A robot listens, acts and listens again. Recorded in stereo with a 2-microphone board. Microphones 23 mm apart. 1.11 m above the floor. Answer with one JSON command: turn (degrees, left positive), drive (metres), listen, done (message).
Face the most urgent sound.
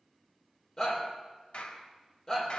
{"turn": 25}
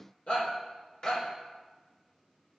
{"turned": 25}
{"turn": 130}
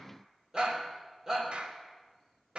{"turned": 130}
{"turn": -25}
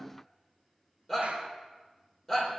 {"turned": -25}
{"turn": 15}
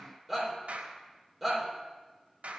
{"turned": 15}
{"done": "Facing the shout, 2 to 4 m away."}